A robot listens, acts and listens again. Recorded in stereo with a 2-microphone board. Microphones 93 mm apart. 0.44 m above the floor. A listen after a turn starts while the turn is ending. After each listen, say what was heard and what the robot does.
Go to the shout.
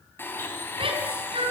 The shout: about 70° right or 110° right. Turn 70° right.
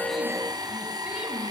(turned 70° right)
Keep listening.
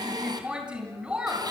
So it is at 10° right. Turn 10° right.
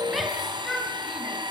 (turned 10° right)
Drive 1.0 m forward.
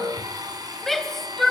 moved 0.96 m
Drive 1.0 m forward.
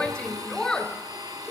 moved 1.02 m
The shout is now 10° left. Turn 10° left.
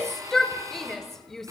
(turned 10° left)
Drive 1.0 m forward.
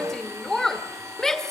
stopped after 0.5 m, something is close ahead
The shout is now 10° left. Turn 10° left.
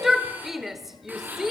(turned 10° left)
I am next to the shout.